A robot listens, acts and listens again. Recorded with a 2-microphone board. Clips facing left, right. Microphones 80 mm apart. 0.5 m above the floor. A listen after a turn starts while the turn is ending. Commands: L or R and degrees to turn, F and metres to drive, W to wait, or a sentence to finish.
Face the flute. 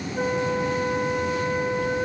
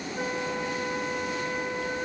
L20
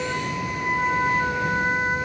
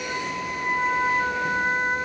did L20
Facing the flute.